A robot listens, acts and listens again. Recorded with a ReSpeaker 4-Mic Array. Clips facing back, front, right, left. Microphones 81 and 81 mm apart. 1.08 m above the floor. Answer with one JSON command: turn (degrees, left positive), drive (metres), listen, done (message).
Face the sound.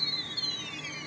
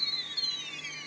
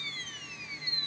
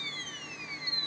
{"listen": true}
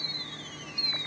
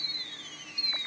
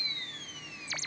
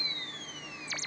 {"listen": true}
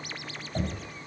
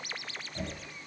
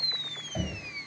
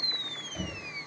{"turn": -155}
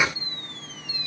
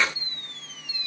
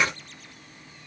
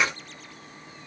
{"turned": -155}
{"listen": true}
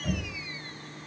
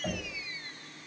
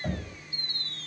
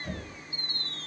{"turn": -50}
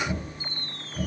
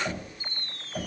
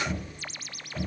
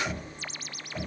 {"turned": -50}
{"done": "Found it: knocking, straight ahead."}